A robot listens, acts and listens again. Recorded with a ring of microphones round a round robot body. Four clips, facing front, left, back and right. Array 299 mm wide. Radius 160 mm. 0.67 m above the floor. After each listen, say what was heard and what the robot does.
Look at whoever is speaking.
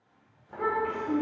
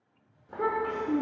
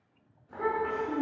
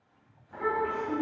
The child speaking: 95° left. Turn 95° left.
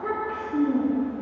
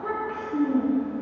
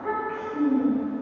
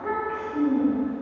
The child speaking is now 50° left. Turn 50° left.
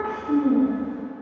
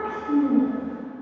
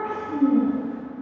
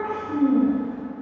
The child speaking is now 40° left. Turn 40° left.
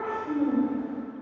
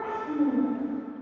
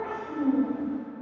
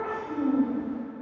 The child speaking is now 25° left. Turn 25° left.
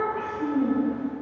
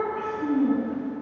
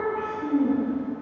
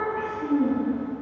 Facing the child speaking, 2 to 4 m away.